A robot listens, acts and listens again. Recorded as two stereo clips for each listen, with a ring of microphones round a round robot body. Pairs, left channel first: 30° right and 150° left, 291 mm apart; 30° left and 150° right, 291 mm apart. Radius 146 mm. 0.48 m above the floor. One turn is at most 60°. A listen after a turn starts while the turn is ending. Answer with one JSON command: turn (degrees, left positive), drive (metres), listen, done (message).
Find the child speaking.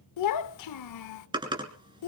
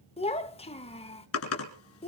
{"turn": -40}
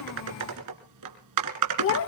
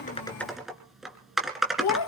{"turn": 10}
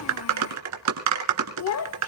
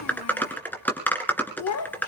{"done": "Facing the child speaking."}